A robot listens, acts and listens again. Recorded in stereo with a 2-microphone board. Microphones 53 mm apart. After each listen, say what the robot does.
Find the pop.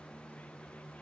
Keep listening.
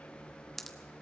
Turn 30° left.
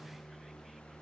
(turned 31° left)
Keep listening.
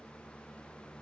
I heard a pop, but can't make it out now. It was about 25° right or 145° left.